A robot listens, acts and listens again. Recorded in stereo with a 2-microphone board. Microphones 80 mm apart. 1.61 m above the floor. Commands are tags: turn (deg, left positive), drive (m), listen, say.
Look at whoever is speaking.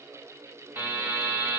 <listen/>
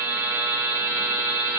<listen/>
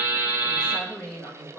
<turn deg="30"/>
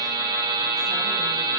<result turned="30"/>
<listen/>
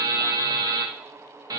<listen/>
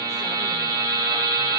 <say>I heard a woman speaking, but can't make it out now. It was about 20° right or 140° left.</say>